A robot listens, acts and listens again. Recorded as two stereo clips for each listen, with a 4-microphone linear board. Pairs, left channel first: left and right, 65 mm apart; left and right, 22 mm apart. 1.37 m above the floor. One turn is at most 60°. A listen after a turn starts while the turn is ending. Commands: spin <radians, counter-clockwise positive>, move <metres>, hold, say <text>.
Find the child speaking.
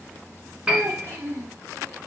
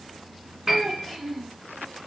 spin -0.87
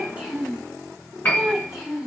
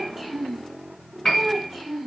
spin -0.17
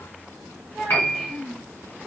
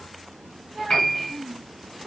say Found it: a child speaking, straight ahead.